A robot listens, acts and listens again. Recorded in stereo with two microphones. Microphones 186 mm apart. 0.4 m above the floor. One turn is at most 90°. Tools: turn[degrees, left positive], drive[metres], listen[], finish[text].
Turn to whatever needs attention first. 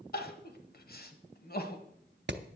Thought: The crying: about 55° left or 125° left.
Action: turn[55]
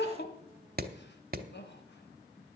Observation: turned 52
Thought: So it is at 70° left.
Action: turn[70]
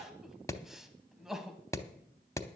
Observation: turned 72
Action: finish[Facing the crying.]